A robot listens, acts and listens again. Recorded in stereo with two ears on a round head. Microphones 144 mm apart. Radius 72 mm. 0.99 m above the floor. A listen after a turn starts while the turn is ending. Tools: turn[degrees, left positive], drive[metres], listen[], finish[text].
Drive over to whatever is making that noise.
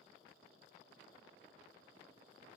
Action: listen[]
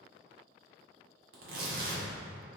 Thought: The tearing paper: about 65° right or 115° right.
Action: turn[-65]
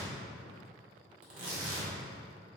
Thought: So it is at 50° right.
Action: turn[-50]
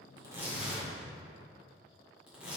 Action: drive[1.0]
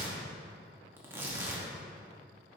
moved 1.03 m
Thought: The tearing paper is now 15° right.
Action: turn[-15]
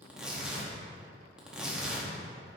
Action: drive[1.0]
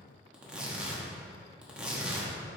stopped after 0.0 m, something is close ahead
Action: finish[Arrived at the tearing paper, straight ahead.]